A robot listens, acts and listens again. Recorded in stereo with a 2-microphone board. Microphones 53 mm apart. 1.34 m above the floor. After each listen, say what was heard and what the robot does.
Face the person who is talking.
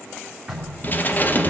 Keep listening.
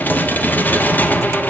Keep listening.
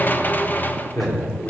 The man speaking: about 70° left or 110° left. Turn 70° left.
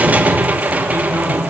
Keep listening.
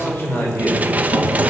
So it is at 45° left. Turn 45° left.
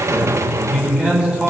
The man speaking is now 15° right. Turn 15° right.
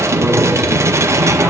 Keep listening.
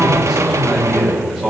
Facing the man speaking.